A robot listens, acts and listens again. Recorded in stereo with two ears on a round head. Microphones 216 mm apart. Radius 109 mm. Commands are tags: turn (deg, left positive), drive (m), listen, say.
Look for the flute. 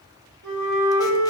<turn deg="-60"/>
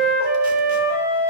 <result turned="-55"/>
<turn deg="-45"/>
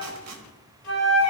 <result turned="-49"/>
<say>Found it: a flute, straight ahead, 2 to 4 m away.</say>